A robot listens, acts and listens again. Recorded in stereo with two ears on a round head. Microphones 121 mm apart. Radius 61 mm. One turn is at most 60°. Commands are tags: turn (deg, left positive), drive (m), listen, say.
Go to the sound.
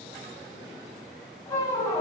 <turn deg="25"/>
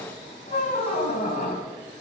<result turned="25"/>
<turn deg="60"/>
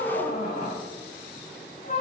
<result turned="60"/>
<turn deg="60"/>
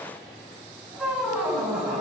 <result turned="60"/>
<drive m="1.0"/>
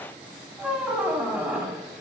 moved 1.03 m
<turn deg="-10"/>
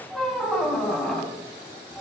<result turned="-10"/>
<drive m="1.0"/>
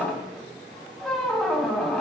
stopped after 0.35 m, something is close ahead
<say>I am next to the squeak.</say>